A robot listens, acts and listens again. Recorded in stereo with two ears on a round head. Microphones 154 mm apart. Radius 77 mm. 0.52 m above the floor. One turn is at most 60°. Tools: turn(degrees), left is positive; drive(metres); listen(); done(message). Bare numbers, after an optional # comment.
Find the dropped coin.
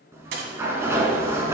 # The dropped coin: about 65° right or 115° right.
turn(-60)
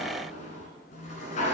listen()
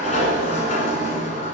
done("I heard a dropped coin, but can't make it out now. It was about 5° right or 55° right.")